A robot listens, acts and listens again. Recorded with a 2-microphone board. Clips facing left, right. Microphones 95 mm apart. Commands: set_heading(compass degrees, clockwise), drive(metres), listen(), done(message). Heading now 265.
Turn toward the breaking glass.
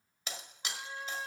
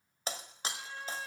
set_heading(300)
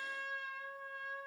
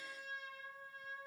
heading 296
listen()
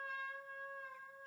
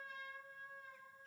done("I heard breaking glass, but can't make it out now. It was about 5° right or 115° right.")